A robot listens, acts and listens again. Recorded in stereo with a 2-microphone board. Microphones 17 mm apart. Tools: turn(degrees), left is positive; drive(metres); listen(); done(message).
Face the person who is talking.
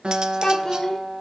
turn(degrees=30)
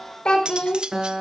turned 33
turn(degrees=120)
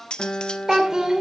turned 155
turn(degrees=-40)
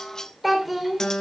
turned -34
done("Found it: a child speaking, straight ahead.")